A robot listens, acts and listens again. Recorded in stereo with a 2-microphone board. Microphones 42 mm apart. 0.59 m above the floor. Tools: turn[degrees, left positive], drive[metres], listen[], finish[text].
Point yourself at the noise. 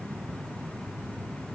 Action: listen[]
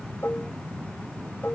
Thought: The dishes clattering: about 65° left or 115° left.
Action: turn[65]
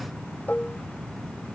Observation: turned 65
Thought: So it is at 45° left.
Action: turn[45]
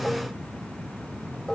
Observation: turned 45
Thought: The dishes clattering is now 15° left.
Action: turn[15]
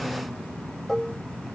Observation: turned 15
Action: finish[Found it: dishes clattering, straight ahead.]